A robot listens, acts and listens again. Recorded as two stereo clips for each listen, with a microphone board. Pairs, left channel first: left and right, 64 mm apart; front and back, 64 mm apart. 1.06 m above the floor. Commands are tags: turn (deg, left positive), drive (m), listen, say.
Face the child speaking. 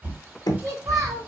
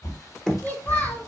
<turn deg="-60"/>
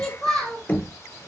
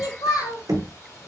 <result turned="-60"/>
<turn deg="10"/>
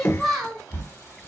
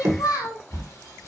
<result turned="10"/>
<say>Found it: a child speaking, straight ahead, 2 to 4 m away.</say>